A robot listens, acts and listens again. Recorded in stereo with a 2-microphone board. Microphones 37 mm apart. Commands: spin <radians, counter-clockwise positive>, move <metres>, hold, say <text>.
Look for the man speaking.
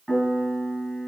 hold
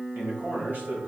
spin -0.96
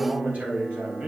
spin -0.96
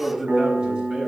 spin -0.52
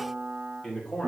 spin 0.35
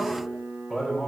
say Found it: a man speaking, straight ahead.